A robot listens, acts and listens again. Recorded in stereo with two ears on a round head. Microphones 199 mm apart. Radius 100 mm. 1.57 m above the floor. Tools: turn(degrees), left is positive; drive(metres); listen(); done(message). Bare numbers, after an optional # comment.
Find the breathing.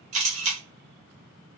listen()
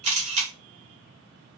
listen()
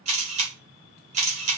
done("I can't make out breathing to turn to.")